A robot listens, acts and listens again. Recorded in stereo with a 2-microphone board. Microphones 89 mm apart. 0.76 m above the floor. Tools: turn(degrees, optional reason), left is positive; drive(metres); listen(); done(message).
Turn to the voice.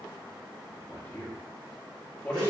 turn(degrees=25, reason="The man speaking: about 25° left or 155° left.")
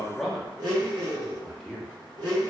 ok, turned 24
done("Facing the man speaking, under 1 m away.")